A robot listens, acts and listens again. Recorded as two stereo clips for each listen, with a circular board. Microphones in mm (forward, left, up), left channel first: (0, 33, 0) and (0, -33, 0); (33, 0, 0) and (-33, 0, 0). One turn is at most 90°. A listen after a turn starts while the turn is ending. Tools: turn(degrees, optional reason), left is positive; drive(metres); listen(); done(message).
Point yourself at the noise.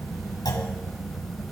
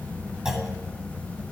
turn(degrees=90, reason="The clunk: 100° left.")
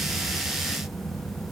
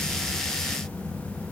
turn(degrees=10, reason="Nothing new. It was at 10° left.")
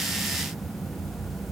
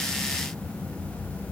done("Facing where the clunk came from. I can't hear it now.")